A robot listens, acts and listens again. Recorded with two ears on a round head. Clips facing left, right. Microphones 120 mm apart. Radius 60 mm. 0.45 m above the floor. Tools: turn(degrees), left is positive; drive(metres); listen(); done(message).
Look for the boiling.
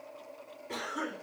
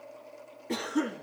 listen()
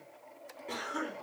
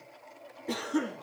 listen()
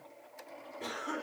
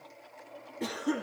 done("I can't make out boiling, only a cough.")